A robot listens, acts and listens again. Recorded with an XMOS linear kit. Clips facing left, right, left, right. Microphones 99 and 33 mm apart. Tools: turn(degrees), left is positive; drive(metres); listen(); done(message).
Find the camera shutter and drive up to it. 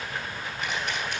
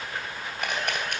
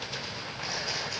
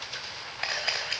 turn(degrees=-55)
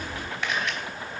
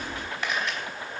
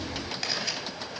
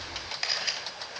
drive(metres=1.0)
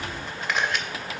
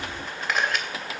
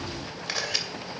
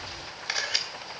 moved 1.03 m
drive(metres=1.0)
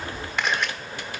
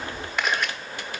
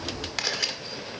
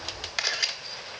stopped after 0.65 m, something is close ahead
done("I am next to the camera shutter.")